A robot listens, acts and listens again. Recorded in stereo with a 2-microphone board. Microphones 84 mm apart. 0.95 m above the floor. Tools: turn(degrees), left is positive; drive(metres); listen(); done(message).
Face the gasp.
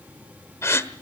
turn(degrees=35)
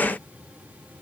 listen()
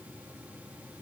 done("I heard a gasp, but can't make it out now. It was about straight ahead or 110° left.")